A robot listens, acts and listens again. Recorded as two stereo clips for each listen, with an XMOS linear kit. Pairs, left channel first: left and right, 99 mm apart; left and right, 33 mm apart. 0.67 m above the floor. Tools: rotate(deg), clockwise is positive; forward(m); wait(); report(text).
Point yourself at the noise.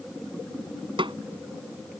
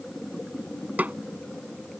rotate(60)
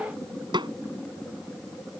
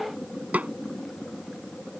rotate(55)
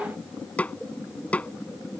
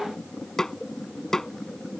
rotate(-15)
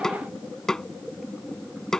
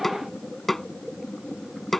report("Found it: a snare drum, straight ahead.")